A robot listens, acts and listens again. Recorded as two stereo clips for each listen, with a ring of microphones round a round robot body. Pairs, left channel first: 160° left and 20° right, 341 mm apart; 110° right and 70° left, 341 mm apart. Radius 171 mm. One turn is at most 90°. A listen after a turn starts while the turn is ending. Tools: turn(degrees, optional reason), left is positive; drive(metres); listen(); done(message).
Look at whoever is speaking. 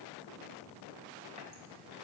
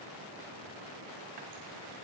listen()
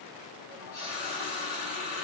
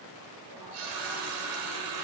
listen()
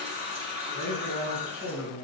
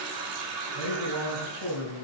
turn(degrees=-70, reason="The man speaking: 70° right.")
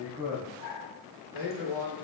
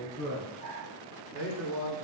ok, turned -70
turn(degrees=-10, reason="The man speaking is now 10° right.")
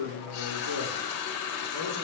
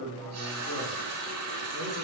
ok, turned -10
done("Found it: a man speaking, straight ahead.")